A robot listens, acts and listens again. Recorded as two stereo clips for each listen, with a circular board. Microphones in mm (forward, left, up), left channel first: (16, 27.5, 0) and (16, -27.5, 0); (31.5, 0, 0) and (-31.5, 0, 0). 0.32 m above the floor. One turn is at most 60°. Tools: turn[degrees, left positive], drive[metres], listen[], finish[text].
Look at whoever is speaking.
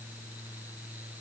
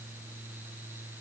Action: listen[]
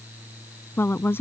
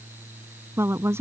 Thought: The woman speaking: 135° left.
Action: turn[60]
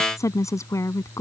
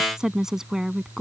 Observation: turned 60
Thought: The woman speaking is now 95° left.
Action: turn[60]
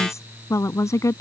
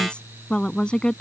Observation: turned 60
Thought: The woman speaking is now 75° left.
Action: turn[60]
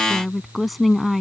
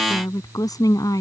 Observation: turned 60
Action: finish[Found it: a woman speaking, straight ahead.]